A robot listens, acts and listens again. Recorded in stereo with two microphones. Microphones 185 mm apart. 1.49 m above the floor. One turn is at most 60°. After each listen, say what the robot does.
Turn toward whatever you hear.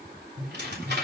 Turn 60° right.
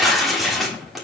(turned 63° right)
Facing the tearing paper.